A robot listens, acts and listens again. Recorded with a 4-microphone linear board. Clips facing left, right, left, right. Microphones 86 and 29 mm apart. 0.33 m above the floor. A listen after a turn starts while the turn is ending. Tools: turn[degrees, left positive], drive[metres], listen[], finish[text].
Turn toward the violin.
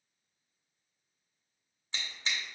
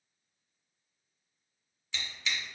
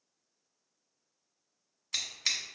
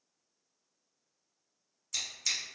Action: listen[]
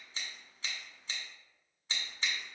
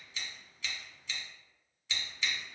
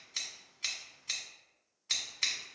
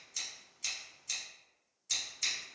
Action: listen[]
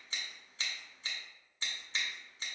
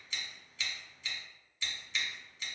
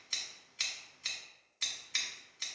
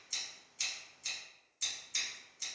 Action: finish[I can't make out a violin to turn to.]